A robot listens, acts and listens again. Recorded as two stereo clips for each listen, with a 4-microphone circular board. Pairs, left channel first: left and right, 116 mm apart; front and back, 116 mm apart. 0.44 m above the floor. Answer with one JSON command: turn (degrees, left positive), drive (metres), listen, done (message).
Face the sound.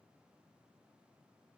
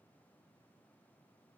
{"listen": true}
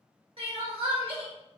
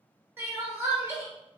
{"turn": -115}
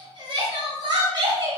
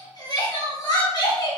{"turn": -50}
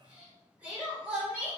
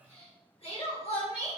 {"turn": -15}
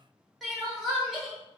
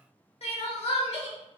{"done": "Found it: crying, straight ahead."}